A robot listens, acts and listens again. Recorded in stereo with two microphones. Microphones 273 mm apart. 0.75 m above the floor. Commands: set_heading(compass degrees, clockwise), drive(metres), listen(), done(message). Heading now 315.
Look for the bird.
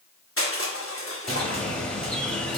set_heading(285)
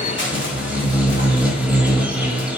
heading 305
set_heading(335)
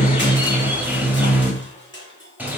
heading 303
set_heading(333)
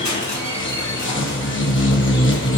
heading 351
set_heading(306)
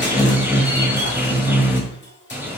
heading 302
done("Facing the bird.")